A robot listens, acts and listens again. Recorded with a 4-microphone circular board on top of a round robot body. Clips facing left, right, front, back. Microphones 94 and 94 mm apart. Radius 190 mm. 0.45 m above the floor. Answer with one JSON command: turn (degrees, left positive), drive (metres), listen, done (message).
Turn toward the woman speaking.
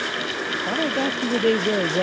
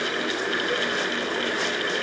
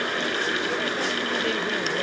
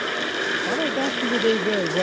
{"turn": 125}
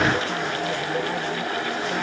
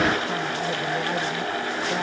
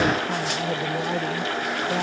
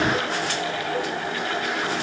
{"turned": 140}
{"turn": -15}
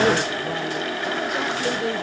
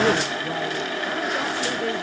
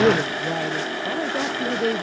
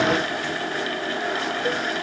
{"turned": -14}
{"done": "Facing the woman speaking."}